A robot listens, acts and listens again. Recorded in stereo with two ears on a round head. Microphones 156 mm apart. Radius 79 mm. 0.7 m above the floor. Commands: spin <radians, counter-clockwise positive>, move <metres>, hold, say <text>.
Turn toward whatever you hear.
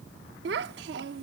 spin -1.22
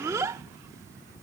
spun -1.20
spin -0.35
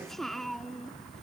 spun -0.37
say Found it: a child speaking, straight ahead.